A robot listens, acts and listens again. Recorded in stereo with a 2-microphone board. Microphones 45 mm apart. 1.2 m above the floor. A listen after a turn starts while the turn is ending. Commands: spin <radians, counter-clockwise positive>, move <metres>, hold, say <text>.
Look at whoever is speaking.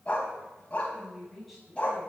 spin 0.52
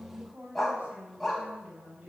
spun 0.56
spin -0.52
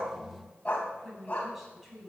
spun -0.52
say Facing the woman speaking.